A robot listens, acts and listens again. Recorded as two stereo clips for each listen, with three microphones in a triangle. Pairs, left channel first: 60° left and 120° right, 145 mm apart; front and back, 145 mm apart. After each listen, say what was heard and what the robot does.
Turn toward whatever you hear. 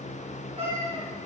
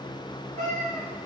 The cat meowing: 70° right. Turn 70° right.
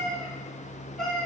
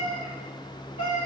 The cat meowing is now 25° right. Turn 25° right.
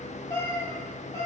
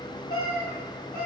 The cat meowing is now 10° right. Turn 10° right.
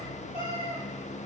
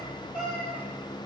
Facing the cat meowing.